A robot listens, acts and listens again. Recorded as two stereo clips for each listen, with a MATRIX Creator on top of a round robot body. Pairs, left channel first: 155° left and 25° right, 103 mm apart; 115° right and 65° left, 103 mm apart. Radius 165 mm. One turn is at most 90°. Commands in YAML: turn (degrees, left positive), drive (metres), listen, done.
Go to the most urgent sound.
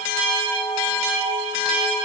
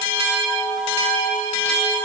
listen: true
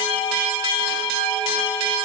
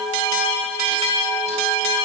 listen: true
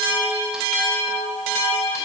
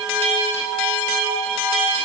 done: "I can't make out anything urgent to turn to."